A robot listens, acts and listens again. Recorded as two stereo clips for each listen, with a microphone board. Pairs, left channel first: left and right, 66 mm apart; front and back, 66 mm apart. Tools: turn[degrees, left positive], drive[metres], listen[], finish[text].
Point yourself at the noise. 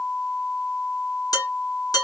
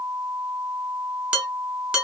Thought: The dishes clattering: 110° left.
Action: turn[110]
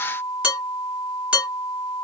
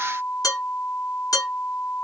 Thought: The dishes clattering is now 15° right.
Action: turn[-15]
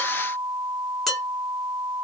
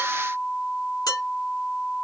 Action: finish[Found it: dishes clattering, straight ahead.]